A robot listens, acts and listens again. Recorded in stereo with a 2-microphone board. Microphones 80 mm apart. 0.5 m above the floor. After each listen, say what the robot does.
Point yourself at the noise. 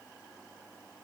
Keep listening.
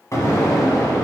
Turn 45° left.
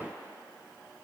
Keep listening.
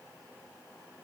I heard an explosion, but can't make it out now. It was about straight ahead or 90° left.